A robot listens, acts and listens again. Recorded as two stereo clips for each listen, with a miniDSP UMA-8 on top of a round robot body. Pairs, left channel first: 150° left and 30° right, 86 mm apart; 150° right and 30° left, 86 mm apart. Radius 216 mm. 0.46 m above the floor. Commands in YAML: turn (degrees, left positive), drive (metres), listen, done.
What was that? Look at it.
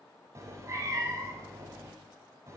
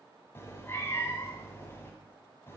turn: -85
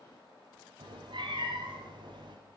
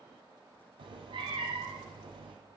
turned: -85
done: "Found it: a cat meowing, straight ahead."